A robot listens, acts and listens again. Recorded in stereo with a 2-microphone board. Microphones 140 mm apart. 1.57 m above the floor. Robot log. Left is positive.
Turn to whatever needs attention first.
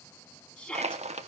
cmd yaw +30
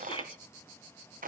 note: So it is at 140° left.
cmd yaw +140
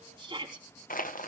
note: The shout is now 35° right.
cmd yaw -35
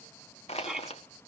end: Found it: a shout, straight ahead.